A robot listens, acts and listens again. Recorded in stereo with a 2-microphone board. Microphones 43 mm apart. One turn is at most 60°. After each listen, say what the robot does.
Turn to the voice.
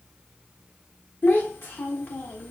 Turn 55° left.
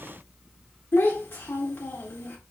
Turn 60° left.
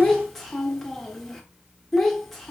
Facing the child speaking, 1 to 2 m away.